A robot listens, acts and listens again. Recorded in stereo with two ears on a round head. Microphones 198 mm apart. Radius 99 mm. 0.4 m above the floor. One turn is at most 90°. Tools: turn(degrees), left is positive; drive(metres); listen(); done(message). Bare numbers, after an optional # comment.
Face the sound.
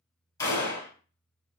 # The gunshot: about 15° left or 165° left.
turn(15)
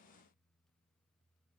listen()
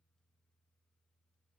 done("I heard a gunshot, but can't make it out now. It was about straight ahead or 150° left.")